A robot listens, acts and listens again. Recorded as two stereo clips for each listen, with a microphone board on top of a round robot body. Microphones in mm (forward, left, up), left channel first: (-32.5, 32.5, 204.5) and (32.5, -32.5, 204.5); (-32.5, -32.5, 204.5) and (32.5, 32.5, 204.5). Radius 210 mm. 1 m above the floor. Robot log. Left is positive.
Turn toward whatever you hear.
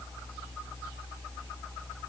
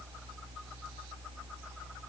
cmd idle
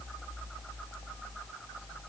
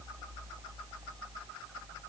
cmd idle
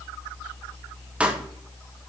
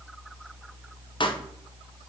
note: The pop: 120° right.
cmd yaw -120
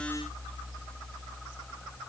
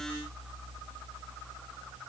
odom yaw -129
note: Nothing new. It was at 10° left.
cmd yaw +10
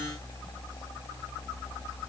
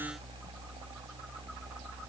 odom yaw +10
end: I heard a pop from this way, but can't make it out now.